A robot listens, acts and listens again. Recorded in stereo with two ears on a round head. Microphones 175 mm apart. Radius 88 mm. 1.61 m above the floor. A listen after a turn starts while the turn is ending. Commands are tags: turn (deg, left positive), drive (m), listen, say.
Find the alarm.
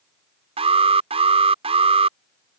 <turn deg="-30"/>
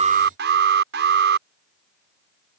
<turn deg="-120"/>
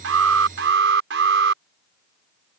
<turn deg="-60"/>
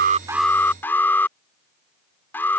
<turn deg="10"/>
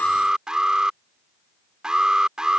<say>Facing the alarm.</say>